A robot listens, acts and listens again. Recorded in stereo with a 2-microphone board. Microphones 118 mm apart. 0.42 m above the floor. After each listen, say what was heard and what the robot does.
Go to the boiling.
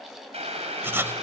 The boiling: about 65° right or 115° right. Turn 65° right.
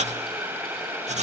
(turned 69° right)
So it is at 20° right. Turn 20° right.
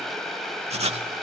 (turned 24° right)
Drive 1.0 m forward.
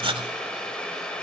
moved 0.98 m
The boiling is now 10° left. Turn 10° left.
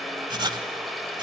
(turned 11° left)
Drive 1.0 m forward.
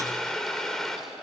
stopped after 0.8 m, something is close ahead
Arrived at the boiling, straight ahead.